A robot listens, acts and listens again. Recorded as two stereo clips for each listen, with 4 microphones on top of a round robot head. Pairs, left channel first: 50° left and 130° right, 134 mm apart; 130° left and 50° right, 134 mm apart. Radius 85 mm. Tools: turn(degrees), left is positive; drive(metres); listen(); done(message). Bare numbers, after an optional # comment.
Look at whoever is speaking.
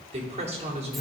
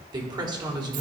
# The woman speaking: 105° right.
turn(-105)
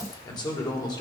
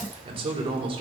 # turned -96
done("Facing the woman speaking.")